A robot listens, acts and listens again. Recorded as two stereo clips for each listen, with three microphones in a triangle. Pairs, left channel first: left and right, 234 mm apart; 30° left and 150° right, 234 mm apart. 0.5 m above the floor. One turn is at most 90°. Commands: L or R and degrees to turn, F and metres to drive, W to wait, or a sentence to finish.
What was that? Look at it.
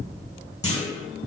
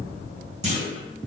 L90
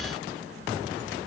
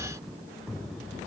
L60
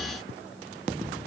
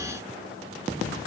I heard a clunk from this way, but can't make it out now.